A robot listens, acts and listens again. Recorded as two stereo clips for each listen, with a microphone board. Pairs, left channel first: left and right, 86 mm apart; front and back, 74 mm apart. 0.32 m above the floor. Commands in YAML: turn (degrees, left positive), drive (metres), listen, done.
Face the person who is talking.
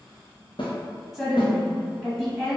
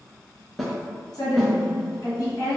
done: "Facing the woman speaking."